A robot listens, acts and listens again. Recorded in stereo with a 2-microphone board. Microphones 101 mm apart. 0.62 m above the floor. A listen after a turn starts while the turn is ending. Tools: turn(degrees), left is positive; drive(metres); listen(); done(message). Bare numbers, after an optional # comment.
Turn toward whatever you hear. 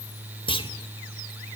# The clunk: about 60° left or 120° left.
turn(60)
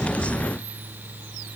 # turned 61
listen()
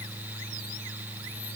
done("I heard a clunk, but can't make it out now. It was about straight ahead or 60° left.")